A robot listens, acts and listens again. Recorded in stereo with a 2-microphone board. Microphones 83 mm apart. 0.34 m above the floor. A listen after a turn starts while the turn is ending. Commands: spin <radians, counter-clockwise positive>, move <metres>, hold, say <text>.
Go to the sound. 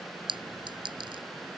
spin -1.22
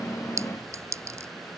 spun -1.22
spin -0.61
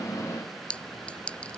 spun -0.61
spin 0.26
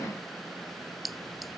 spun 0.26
move 1.0
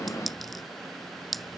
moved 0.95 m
move 1.0
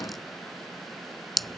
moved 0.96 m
move 1.0
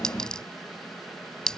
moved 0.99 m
spin 0.17
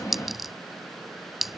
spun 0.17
move 1.0
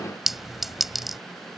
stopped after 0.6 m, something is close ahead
say Arrived at the clink, straight ahead.